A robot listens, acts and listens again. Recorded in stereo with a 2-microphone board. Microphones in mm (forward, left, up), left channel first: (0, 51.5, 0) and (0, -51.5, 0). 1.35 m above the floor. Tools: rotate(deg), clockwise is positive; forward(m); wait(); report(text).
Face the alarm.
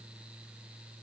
wait()
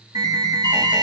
rotate(40)
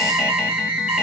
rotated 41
rotate(10)
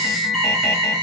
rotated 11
report("Facing the alarm.")